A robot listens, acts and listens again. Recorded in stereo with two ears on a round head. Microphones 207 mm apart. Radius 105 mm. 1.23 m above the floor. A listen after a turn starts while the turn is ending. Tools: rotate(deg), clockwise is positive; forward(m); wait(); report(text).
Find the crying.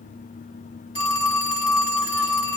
wait()
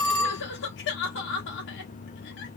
rotate(-50)
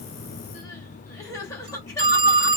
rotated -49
rotate(-15)
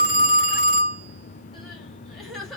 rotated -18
report("Facing the crying, under 1 m away.")